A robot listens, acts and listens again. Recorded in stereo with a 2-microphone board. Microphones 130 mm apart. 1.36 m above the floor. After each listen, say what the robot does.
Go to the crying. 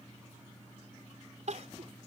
Turn 65° right.
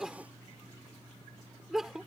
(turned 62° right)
Drive 1.0 m forward.
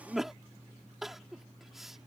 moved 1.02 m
Drive 1.0 m forward.
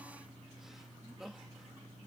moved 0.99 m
Drive 1.0 m forward.
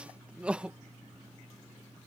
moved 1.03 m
Turn 10° right.
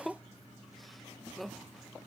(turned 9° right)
Drive 1.0 m forward.
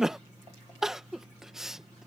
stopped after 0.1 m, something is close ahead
Arrived at the crying, straight ahead.